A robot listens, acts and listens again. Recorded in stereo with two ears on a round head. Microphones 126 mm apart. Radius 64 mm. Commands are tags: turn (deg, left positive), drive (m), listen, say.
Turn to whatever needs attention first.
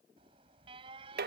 <turn deg="-35"/>
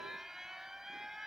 <say>Found it: an alarm, straight ahead.</say>